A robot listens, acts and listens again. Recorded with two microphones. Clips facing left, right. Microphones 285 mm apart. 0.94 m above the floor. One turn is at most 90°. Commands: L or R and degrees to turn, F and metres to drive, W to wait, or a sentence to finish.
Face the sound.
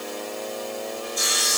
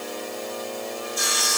R65
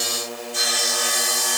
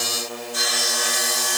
Facing the sawing.